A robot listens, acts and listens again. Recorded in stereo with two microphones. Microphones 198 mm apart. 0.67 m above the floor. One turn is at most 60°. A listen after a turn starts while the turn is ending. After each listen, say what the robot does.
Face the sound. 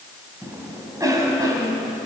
Turn 15° right.
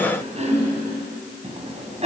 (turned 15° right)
Turn 60° right.
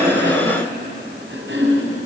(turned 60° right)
Turn 60° right.
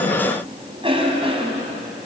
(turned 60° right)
Turn 30° right.
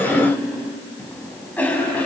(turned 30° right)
Turn 10° left.
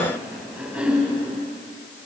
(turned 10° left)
Found it: a cough, straight ahead.